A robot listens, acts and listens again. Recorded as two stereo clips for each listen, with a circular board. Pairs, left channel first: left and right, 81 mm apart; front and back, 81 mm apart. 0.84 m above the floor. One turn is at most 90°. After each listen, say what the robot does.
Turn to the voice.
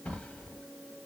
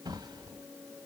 Keep listening.
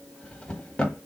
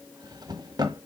Keep listening.
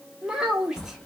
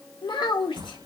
Turn 10° right.
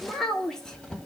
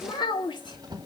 Facing the child speaking, 1 to 2 m away.